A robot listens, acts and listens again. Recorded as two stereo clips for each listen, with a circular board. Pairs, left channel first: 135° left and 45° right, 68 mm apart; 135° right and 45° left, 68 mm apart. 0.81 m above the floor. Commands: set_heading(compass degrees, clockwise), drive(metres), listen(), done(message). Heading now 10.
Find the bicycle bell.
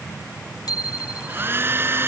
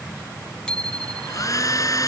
set_heading(220)
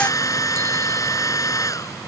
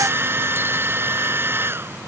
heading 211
set_heading(221)
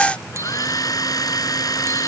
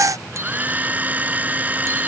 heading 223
listen()
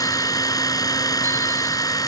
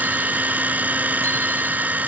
done("Facing where the bicycle bell came from. I can't hear it now.")